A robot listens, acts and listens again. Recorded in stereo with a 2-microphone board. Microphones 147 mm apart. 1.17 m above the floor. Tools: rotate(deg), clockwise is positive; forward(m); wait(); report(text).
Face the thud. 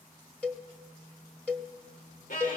wait()
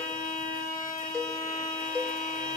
wait()
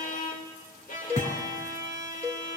rotate(-50)
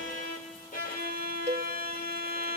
wait()
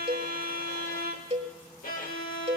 report("I heard a thud, but can't make it out now. It was about straight ahead or 80° left.")